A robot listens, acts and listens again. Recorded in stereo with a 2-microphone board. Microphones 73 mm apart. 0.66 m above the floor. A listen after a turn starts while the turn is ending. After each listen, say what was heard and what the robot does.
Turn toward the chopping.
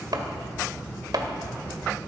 The chopping: about 70° right or 110° right. Turn 70° right.
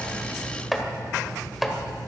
Facing the chopping, 1 to 2 m away.